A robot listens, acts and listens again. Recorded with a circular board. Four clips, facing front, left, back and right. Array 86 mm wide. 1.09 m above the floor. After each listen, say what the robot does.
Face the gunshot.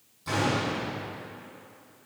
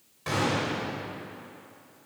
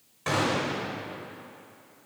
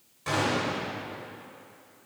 Turn 175° left.
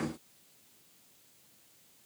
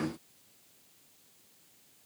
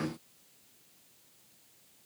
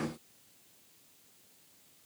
I heard a gunshot from this way, but can't make it out now.